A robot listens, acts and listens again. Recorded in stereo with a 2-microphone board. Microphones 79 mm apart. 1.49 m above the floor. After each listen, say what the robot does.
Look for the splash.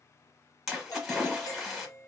Turn 30° left.
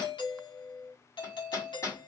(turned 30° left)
Keep listening.
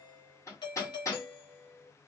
I heard a splash, but can't make it out now. It was about 30° right or 150° left.